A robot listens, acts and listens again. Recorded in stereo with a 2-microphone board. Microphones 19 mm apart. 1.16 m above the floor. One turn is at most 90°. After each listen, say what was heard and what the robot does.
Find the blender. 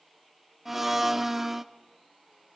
The blender: about 20° right or 160° right. Turn 20° right.
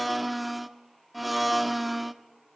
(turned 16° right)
Facing the blender, 1 to 2 m away.